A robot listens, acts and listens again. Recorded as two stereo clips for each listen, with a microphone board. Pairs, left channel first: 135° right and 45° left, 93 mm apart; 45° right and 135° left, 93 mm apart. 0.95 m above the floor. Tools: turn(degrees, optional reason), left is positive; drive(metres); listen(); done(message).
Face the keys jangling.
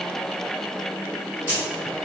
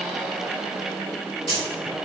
turn(degrees=-25, reason="The keys jangling: 25° right.")
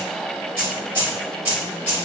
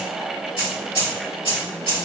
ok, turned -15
turn(degrees=-25, reason="The keys jangling is now 25° right.")
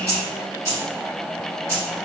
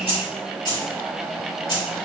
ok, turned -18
turn(degrees=-15, reason="The keys jangling is now 15° right.")
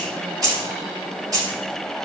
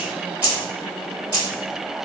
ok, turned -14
done("Found it: keys jangling, straight ahead.")